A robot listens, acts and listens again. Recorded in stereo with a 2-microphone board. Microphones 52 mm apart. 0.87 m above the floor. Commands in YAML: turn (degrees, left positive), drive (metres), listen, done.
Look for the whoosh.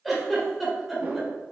turn: -30
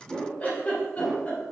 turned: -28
done: "Facing the whoosh."